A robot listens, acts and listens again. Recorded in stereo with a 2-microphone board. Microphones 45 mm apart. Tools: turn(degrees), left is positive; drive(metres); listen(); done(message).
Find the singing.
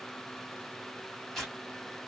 listen()
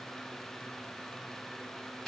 listen()
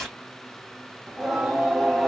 turn(degrees=30)
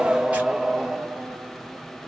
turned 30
turn(degrees=-30)
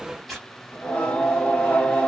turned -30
turn(degrees=25)
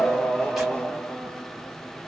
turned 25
turn(degrees=15)
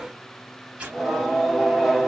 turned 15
done("Facing the singing.")